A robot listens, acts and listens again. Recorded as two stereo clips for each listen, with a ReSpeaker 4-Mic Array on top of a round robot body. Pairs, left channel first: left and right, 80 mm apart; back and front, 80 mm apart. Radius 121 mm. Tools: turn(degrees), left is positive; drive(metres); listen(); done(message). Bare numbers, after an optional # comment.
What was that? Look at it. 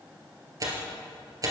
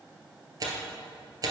# The tearing paper: 40° right.
turn(-40)
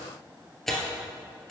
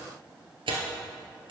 done("Found it: tearing paper, straight ahead.")